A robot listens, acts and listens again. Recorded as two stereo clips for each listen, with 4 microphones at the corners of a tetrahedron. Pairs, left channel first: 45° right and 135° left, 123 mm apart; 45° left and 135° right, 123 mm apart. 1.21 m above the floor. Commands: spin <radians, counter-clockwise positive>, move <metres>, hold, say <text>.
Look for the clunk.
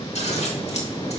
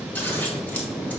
hold
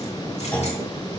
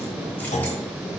spin 0.61
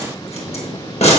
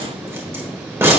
say Facing where the clunk came from. I can't hear it now.